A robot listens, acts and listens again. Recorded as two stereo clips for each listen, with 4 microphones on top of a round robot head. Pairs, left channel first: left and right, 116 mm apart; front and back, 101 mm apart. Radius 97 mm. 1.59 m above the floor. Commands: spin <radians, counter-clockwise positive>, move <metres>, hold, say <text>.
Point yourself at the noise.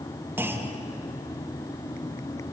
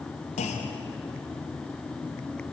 spin -0.26
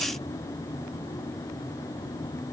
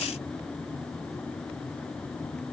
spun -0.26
say I heard a clunk from this way, but can't make it out now.